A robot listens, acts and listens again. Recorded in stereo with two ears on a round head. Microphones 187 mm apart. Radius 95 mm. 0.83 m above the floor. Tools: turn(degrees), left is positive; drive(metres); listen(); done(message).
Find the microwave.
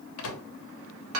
turn(degrees=70)
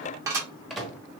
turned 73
done("Found it: a microwave, straight ahead, under 1 m away.")